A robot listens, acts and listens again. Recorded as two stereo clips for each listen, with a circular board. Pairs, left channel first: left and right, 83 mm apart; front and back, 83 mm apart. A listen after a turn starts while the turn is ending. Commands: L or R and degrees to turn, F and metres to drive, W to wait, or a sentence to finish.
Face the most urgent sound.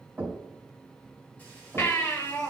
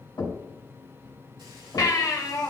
L35
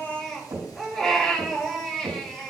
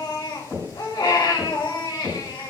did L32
Facing the baby crying.